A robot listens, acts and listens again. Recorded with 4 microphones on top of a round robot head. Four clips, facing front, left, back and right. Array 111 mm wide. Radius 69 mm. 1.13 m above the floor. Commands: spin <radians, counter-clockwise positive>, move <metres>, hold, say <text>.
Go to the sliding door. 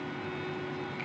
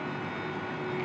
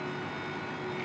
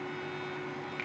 hold
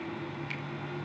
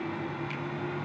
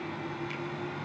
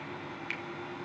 hold
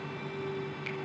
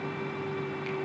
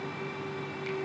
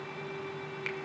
say I can't make out a sliding door.